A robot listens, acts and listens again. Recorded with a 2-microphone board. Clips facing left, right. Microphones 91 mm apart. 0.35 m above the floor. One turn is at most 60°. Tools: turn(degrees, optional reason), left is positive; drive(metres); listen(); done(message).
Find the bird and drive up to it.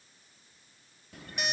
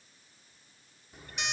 turn(degrees=60)
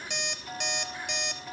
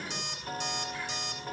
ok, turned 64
turn(degrees=25, reason="So it is at 25° left.")
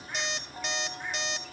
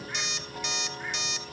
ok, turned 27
listen()
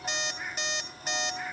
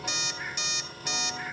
drive(metres=1.0)
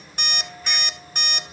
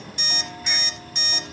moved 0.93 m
drive(metres=1.0)
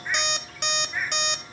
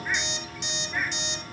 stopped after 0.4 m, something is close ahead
done("I am next to the bird.")